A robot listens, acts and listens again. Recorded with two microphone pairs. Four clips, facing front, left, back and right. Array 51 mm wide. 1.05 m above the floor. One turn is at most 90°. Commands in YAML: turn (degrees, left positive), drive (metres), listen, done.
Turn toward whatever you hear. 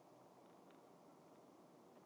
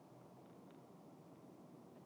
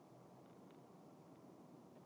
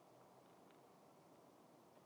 listen: true
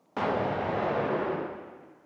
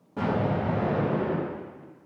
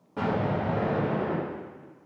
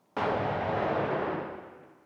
turn: -55
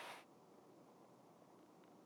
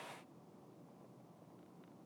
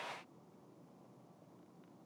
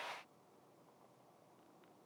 done: "Facing where the explosion came from. I can't hear it now."